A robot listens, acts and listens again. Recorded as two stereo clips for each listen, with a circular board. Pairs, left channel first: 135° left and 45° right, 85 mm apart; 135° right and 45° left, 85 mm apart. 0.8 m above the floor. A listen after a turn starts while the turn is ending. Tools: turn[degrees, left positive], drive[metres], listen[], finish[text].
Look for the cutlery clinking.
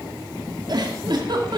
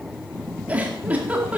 Action: listen[]
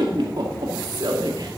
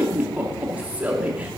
Action: listen[]
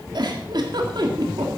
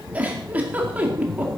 Action: finish[I can't make out cutlery clinking to turn to.]